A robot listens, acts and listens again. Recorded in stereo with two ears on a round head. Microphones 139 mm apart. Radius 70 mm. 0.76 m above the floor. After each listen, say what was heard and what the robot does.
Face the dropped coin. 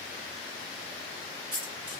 The dropped coin: about 30° right or 150° right. Turn 30° right.
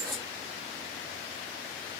Facing the dropped coin.